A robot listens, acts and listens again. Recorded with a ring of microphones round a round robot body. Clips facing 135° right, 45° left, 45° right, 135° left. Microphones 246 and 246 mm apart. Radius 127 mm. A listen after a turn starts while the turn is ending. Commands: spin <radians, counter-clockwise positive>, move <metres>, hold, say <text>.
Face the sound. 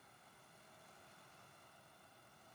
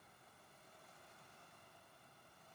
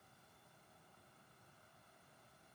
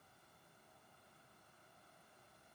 hold
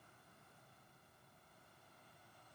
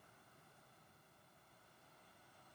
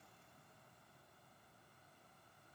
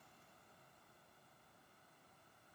hold
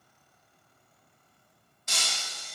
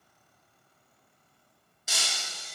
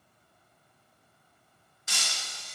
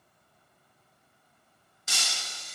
spin 2.27
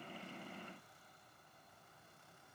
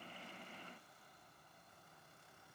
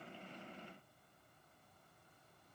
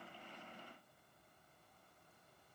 say Facing where the breaking glass came from. I can't hear it now.